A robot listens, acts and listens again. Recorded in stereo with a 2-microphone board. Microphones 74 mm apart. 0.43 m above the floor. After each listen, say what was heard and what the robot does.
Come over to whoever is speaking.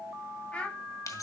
The child speaking: about 15° left or 165° left. Turn 15° left.
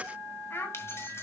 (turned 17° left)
So it is at 145° left. Turn 145° left.
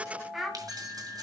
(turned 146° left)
Drive 1.0 m forward.
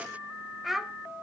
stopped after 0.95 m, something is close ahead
I am next to the child speaking.